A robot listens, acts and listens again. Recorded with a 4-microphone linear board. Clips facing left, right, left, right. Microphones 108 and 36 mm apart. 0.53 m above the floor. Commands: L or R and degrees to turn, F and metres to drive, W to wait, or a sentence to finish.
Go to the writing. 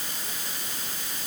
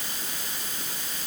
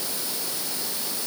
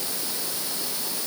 W
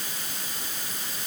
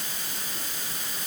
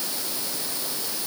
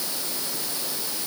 W
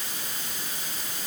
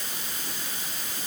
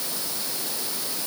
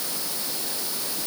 I can't make out writing.